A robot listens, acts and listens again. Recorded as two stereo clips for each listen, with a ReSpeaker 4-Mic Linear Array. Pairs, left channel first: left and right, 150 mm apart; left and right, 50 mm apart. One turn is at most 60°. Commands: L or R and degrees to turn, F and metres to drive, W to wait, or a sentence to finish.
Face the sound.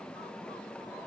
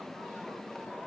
W
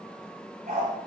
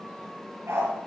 R60
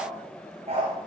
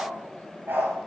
R45
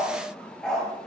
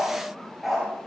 Facing the dog barking, over 4 m away.